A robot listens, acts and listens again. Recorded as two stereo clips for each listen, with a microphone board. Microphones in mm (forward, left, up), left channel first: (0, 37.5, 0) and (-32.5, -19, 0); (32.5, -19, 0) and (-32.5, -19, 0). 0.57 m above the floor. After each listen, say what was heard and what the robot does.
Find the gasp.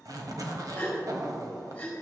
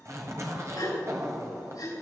The gasp: 10° right. Turn 10° right.
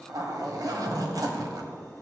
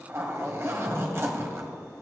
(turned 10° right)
I heard a gasp from this way, but can't make it out now.